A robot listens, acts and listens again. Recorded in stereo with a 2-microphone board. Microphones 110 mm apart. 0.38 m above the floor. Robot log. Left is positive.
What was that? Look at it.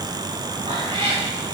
note: The cat meowing: about 50° right or 130° right.
cmd yaw -50
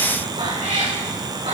note: So it is at 85° right.
cmd yaw -85
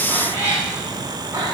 note: The cat meowing is now 30° right.
cmd yaw -30
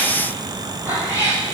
note: The cat meowing is now 20° right.
cmd yaw -20
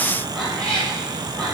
end: Facing the cat meowing.